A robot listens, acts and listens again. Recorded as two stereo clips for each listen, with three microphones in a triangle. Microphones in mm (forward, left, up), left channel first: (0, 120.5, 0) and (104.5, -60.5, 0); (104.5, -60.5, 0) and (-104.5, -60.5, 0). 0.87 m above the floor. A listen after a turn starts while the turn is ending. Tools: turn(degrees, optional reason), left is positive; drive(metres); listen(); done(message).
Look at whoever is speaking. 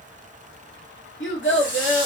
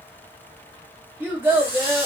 turn(degrees=100, reason="The child speaking: 100° left.")
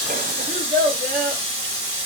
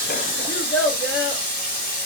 turn(degrees=-15, reason="The child speaking is now 15° right.")
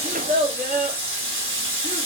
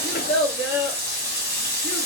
done("Found it: a child speaking, straight ahead, 1 to 2 m away.")